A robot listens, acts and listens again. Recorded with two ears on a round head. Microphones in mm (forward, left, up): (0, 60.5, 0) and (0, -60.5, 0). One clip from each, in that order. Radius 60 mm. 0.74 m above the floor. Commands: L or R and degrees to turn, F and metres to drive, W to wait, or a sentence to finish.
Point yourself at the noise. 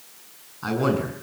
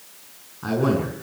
L50
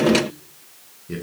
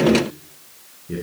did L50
L75
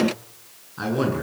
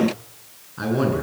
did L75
L10
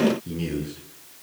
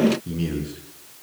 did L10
Found it: a man speaking, straight ahead, over 4 m away.